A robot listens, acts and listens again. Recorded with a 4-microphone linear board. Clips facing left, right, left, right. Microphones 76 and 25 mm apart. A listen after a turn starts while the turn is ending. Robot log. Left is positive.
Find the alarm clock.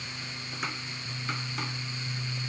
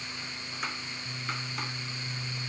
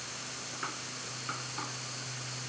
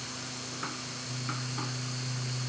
cmd idle
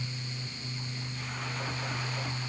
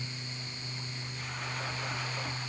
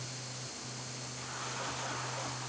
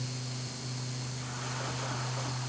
cmd idle
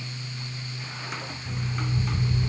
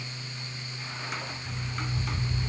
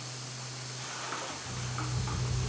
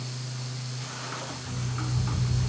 note: The alarm clock: about 20° left or 160° left.
cmd yaw +20
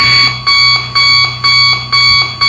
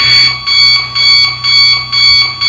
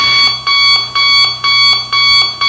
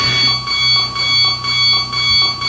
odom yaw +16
note: So it is at 140° left.
cmd yaw +140
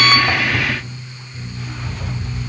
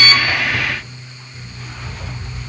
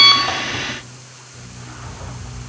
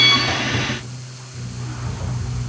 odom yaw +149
end: Found it: an alarm clock, straight ahead.